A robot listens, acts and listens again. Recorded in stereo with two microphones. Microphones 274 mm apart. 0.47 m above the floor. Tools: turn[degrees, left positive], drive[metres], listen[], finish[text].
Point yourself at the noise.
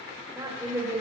Action: turn[-30]
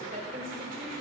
Thought: So it is at 150° right.
Action: turn[-150]
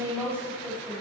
Thought: The woman speaking is now 10° right.
Action: turn[-10]
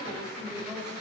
Action: finish[Found it: a woman speaking, straight ahead.]